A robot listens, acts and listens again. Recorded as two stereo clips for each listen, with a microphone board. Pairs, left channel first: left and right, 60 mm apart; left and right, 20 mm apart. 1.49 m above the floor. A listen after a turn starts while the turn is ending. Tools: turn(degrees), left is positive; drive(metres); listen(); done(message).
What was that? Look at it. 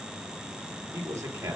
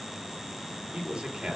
turn(degrees=-50)
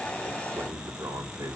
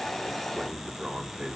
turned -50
turn(degrees=-85)
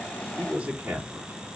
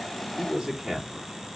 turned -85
turn(degrees=-25)
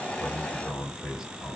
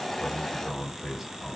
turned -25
turn(degrees=-10)
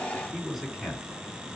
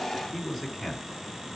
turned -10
done("Found it: a man speaking, straight ahead.")